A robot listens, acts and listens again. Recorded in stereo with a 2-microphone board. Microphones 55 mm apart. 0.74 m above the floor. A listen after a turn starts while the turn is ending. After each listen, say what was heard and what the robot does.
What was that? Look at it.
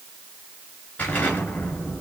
The explosion: about 30° left or 150° left. Turn 30° left.
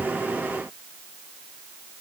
Keep listening.
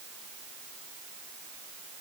I heard an explosion, but can't make it out now. It was about straight ahead or 120° left.